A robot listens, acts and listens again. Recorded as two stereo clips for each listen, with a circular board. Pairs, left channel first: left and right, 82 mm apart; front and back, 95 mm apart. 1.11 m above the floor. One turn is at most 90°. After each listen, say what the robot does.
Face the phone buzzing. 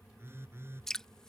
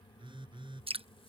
Turn 90° right.
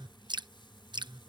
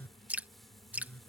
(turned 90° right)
Turn 70° right.
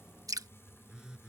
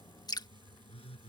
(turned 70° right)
Turn 10° right.
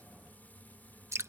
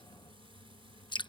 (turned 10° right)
Keep listening.
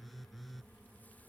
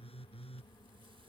Facing the phone buzzing.